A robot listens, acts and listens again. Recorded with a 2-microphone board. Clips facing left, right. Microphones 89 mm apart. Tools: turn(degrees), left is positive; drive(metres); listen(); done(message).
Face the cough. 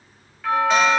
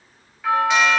listen()
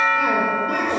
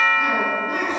turn(degrees=70)
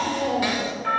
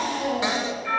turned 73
turn(degrees=40)
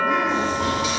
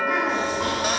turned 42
done("Facing the cough.")